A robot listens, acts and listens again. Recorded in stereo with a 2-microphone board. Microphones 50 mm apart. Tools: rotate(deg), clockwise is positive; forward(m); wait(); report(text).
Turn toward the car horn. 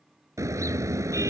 rotate(90)
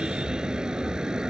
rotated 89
rotate(15)
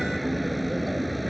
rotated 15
report("Found it: a car horn, straight ahead.")